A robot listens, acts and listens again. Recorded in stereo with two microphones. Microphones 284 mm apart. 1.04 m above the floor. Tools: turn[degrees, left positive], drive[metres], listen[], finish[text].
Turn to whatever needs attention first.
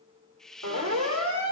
Action: turn[-90]
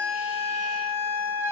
Thought: So it is at 10° right.
Action: turn[-10]
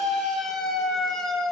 Action: finish[Facing the siren.]